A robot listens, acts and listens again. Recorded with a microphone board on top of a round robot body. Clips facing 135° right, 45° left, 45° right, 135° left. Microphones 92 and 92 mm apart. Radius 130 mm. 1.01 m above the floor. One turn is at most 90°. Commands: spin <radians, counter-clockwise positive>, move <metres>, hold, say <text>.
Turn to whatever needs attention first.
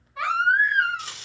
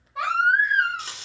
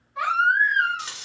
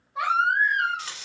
spin 1.22
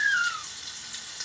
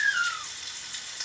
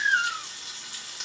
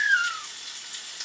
spin -0.17
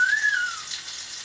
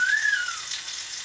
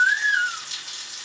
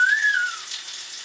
say Found it: a baby crying, straight ahead.